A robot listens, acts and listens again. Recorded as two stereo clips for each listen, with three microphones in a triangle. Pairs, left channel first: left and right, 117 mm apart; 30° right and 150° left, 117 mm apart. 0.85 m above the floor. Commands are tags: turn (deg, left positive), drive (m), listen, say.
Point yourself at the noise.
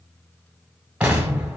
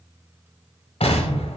<turn deg="-10"/>
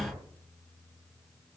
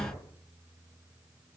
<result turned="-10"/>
<say>Found it: an explosion, straight ahead, 1 to 2 m away.</say>